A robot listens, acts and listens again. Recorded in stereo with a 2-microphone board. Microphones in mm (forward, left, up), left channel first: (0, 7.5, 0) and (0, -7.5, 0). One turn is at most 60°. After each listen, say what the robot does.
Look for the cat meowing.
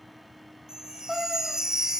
Turn 30° right.
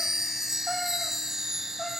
Keep listening.
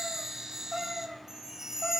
Turn 10° left.
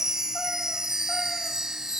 Keep listening.
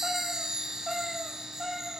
Facing the cat meowing, over 4 m away.